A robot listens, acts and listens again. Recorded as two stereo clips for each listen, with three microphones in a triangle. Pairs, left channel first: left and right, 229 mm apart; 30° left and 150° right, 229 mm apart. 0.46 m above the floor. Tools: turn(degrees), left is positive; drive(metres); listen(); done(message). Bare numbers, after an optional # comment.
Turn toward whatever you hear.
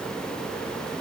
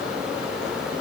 listen()
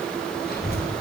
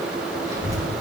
# The child speaking: 135° left.
turn(135)
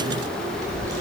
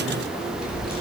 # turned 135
# The child speaking is now 15° right.
turn(-15)
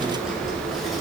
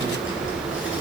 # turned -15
done("Found it: a child speaking, straight ahead.")